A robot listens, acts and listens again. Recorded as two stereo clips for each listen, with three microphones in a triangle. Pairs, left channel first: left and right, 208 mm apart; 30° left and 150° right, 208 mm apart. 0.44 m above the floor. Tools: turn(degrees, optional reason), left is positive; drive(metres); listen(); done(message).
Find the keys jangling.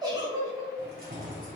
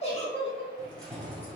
turn(degrees=-50, reason="The keys jangling: 50° right.")
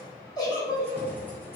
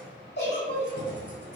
turn(degrees=10, reason="The keys jangling is now 10° left.")
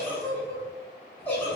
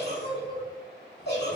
listen()
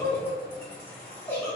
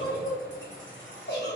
turn(degrees=15, reason="The keys jangling is now 15° left.")
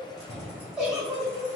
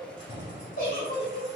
done("Facing the keys jangling.")